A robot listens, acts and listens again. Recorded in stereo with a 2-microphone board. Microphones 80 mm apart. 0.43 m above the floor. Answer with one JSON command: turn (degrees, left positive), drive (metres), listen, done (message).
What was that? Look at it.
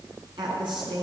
{"turn": -90}
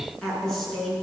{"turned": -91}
{"done": "Facing the woman speaking, over 4 m away."}